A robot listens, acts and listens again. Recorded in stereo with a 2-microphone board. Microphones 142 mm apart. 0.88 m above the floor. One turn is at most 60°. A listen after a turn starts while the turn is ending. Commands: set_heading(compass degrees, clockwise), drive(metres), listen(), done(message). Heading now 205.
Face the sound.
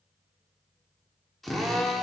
set_heading(175)
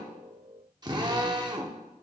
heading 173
set_heading(203)
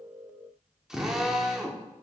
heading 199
done("Found it: a drill, straight ahead.")